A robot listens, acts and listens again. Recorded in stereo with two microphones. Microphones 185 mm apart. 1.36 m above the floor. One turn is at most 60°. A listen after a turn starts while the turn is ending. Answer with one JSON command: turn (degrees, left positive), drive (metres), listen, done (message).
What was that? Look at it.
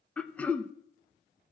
{"turn": 30}
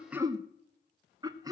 {"turn": -20}
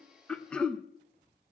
{"done": "Facing the throat clearing, under 1 m away."}